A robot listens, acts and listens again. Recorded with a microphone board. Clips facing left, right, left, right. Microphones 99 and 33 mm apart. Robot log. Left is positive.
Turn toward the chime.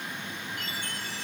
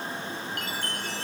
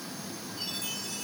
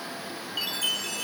cmd yaw -90
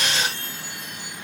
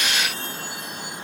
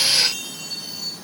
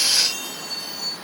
end: Facing the chime.